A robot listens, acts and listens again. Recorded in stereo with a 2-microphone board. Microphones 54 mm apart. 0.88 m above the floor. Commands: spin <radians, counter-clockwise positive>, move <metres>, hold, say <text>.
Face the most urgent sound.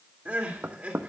spin -0.52
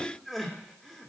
say Facing the crying.